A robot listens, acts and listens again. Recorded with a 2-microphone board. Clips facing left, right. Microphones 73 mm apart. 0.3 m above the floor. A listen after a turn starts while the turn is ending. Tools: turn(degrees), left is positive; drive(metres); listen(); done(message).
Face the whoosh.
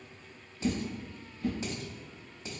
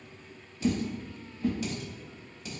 turn(degrees=-20)
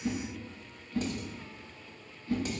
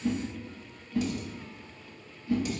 turn(degrees=-10)
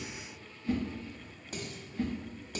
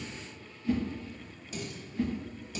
done("Facing the whoosh.")